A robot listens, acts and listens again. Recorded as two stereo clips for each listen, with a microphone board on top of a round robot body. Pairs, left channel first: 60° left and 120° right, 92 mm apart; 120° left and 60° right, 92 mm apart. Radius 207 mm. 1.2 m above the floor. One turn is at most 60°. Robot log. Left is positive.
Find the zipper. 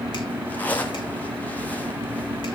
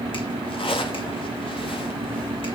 note: The zipper: 130° left.
cmd yaw +60
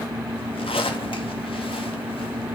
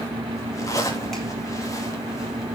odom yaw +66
note: The zipper is now 65° left.
cmd yaw +60
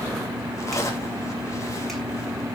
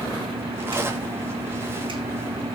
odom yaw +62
end: Facing the zipper.